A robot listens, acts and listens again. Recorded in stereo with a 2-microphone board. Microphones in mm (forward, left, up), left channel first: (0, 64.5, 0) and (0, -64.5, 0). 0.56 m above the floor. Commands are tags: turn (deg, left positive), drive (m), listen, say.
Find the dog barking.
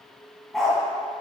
<turn deg="30"/>
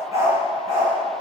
<turn deg="-20"/>
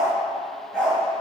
<say>Facing the dog barking.</say>